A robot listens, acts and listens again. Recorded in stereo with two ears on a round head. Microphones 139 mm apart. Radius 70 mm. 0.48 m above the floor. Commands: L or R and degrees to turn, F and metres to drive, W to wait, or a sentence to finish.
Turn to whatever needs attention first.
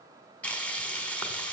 W
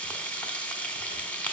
W
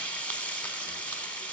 I can't make out anything urgent to turn to.